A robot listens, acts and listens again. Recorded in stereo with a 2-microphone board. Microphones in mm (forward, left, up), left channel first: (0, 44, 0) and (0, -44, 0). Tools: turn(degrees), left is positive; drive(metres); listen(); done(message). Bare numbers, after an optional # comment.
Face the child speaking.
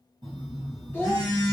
# The child speaking: about 20° right or 160° right.
turn(-20)
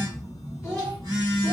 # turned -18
turn(-30)
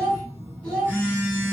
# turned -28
# So it is at 15° left.
turn(15)
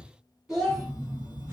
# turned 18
done("Found it: a child speaking, straight ahead, 2 to 4 m away.")